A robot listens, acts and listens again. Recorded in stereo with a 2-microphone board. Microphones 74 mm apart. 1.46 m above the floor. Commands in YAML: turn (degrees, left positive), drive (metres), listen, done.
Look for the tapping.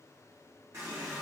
listen: true
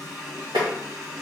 turn: -90
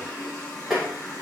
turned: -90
done: "Found it: tapping, straight ahead."